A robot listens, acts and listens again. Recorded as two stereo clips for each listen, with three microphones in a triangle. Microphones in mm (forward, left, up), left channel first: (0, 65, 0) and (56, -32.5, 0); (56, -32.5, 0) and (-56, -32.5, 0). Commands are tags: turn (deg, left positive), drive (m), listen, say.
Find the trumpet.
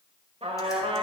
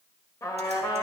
<turn deg="-60"/>
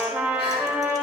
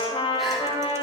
<turn deg="10"/>
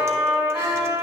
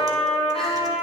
<say>Facing the trumpet.</say>